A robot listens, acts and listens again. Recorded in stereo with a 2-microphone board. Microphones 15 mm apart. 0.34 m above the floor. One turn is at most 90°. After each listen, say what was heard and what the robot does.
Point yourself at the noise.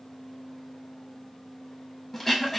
Turn 30° left.
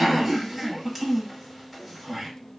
So it is at 15° right. Turn 15° right.
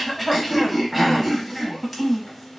Facing the throat clearing, under 1 m away.